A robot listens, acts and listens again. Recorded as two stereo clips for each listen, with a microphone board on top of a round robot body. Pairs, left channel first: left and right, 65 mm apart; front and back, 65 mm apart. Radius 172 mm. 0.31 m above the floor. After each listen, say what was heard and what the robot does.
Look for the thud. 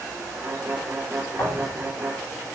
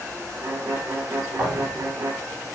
The thud: 125° left. Turn 125° left.
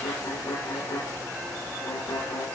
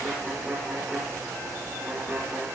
I heard a thud from this way, but can't make it out now.